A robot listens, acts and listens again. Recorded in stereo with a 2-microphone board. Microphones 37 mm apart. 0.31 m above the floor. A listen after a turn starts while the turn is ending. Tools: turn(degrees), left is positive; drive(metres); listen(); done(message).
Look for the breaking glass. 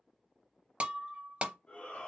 turn(degrees=-35)
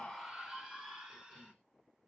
listen()
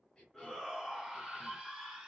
done("I heard breaking glass, but can't make it out now. It was about straight ahead or 110° right.")